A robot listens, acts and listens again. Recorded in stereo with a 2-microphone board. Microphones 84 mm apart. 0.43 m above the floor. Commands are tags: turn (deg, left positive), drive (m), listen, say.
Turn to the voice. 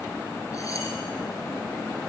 <listen/>
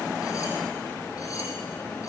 <listen/>
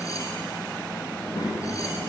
<turn deg="55"/>
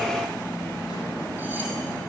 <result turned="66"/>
<listen/>
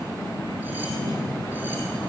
<turn deg="55"/>
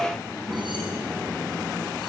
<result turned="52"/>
<say>Found it: a child speaking, straight ahead.</say>